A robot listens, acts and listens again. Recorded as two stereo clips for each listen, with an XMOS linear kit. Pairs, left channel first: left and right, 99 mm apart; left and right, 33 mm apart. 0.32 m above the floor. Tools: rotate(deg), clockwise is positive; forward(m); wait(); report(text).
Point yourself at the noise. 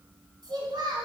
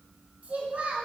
rotate(55)
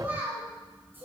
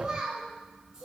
rotate(25)
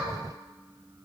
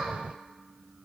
wait()
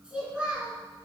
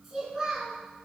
rotate(10)
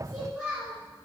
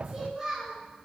rotate(10)
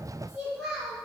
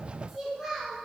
report("Found it: a child speaking, straight ahead, over 4 m away.")